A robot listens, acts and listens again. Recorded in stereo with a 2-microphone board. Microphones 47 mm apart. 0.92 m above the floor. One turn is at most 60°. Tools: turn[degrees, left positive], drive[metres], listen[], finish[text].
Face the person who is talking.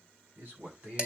Thought: The man speaking: about 55° right or 125° right.
Action: turn[-55]
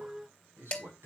Thought: So it is at 70° right.
Action: turn[-60]
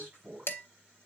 Thought: The man speaking is now 40° right.
Action: turn[-40]
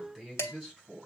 Action: finish[Facing the man speaking, over 4 m away.]